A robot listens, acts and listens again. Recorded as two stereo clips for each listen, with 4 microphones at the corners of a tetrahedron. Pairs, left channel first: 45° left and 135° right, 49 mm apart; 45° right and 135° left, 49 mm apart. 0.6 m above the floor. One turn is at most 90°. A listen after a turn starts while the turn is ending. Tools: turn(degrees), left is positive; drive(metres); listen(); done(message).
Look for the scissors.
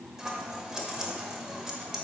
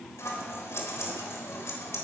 turn(degrees=-55)
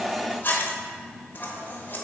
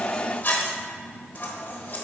done("Facing the scissors.")